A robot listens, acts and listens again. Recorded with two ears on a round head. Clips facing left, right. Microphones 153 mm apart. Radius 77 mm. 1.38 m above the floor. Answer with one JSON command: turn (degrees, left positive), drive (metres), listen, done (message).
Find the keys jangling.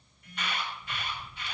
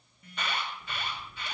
{"turn": -40}
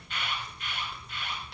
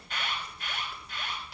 {"done": "Found it: keys jangling, straight ahead, over 4 m away."}